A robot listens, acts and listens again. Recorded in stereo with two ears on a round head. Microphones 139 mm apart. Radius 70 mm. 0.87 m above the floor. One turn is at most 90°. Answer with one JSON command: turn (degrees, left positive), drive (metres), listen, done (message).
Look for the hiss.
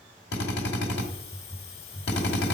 {"turn": 40}
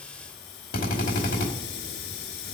{"turn": 90}
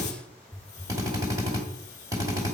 {"turn": 20}
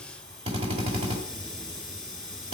{"done": "Facing the hiss."}